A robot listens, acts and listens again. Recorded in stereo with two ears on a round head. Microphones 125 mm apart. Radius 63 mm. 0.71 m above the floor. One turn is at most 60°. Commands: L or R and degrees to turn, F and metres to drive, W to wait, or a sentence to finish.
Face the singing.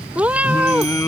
L20
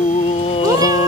L60
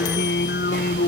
L60
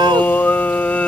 L10
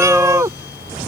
Facing the singing.